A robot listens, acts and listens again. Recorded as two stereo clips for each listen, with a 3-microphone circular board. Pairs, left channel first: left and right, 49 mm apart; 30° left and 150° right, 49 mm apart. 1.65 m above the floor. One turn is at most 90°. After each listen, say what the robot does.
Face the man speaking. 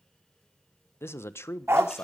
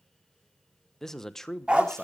Turn 90° left.
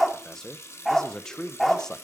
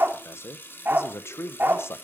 Turn 15° left.
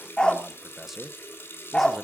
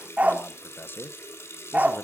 Facing the man speaking.